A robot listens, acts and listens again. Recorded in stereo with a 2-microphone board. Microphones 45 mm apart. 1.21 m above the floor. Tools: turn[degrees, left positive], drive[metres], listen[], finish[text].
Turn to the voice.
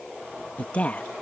Thought: The woman speaking: about 30° left or 150° left.
Action: turn[30]
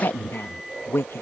Thought: So it is at 120° left.
Action: turn[120]
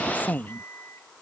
Thought: The woman speaking is now 40° left.
Action: turn[40]
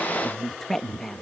Thought: The woman speaking is now 10° left.
Action: turn[10]
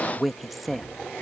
Action: finish[Facing the woman speaking.]